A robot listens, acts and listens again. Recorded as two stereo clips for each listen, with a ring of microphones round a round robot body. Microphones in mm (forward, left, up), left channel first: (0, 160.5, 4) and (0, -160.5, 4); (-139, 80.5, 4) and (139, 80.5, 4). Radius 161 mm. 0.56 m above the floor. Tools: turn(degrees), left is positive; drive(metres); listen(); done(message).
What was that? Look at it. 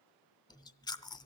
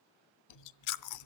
turn(degrees=170)
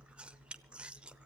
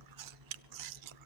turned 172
done("Facing the chewing.")